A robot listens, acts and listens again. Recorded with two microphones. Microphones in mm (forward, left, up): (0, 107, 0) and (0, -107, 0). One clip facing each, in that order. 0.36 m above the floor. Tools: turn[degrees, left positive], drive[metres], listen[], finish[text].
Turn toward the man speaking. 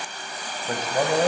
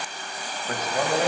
Thought: The man speaking: about 35° left or 145° left.
Action: turn[35]
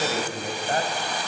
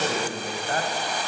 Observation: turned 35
Thought: The man speaking: about 30° left or 150° left.
Action: turn[30]
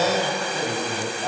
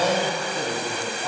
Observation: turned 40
Thought: So it is at 20° left.
Action: turn[20]
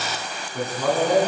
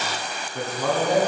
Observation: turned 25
Action: finish[Facing the man speaking.]